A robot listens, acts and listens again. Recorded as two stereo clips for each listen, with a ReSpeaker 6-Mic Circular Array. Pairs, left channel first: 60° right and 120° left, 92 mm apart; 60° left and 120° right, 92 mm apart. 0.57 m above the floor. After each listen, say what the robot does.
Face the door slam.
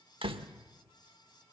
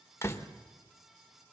Turn 120° left.
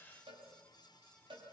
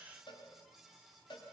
I heard a door slam from this way, but can't make it out now.